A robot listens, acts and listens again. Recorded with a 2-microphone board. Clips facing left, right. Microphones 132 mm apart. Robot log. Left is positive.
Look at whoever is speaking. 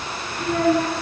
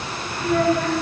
note: The child speaking: about 45° left or 135° left.
cmd yaw +45
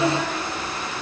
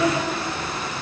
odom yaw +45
note: So it is at 85° left.
cmd yaw +85
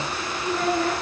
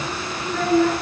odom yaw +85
note: The child speaking is now 15° left.
cmd yaw +15
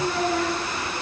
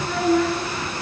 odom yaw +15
end: Facing the child speaking, over 4 m away.